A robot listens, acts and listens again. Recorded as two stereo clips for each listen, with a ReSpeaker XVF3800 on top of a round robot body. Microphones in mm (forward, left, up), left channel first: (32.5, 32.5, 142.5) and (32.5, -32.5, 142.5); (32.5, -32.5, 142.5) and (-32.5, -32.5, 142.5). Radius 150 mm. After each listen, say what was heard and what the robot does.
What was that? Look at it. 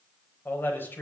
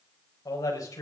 The man speaking: 35° left. Turn 35° left.
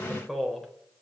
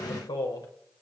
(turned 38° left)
Found it: a man speaking, straight ahead.